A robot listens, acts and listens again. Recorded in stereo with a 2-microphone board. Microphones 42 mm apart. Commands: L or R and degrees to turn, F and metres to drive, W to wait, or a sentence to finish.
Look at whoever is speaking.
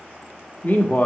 L45
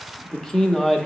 L15
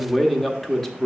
L10
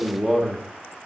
Facing the man speaking, under 1 m away.